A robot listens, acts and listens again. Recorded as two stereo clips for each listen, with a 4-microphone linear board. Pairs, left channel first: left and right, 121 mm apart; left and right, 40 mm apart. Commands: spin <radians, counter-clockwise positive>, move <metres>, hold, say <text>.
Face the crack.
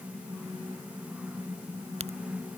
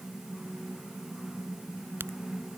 spin -1.13
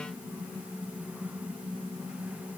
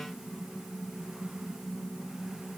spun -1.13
hold
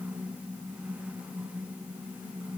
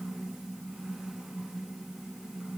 say I heard a crack, but can't make it out now. It was about straight ahead or 50° right.